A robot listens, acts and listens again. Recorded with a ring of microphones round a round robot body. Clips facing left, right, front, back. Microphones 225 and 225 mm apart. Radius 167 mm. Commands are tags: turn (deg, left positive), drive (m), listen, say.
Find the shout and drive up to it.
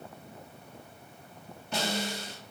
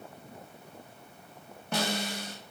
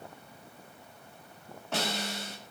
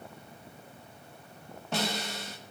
<listen/>
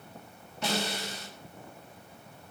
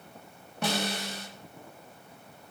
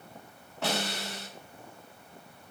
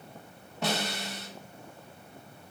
<listen/>
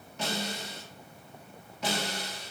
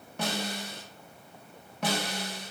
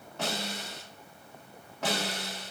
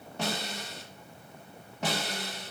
<say>I can't make out a shout, only a snare drum.</say>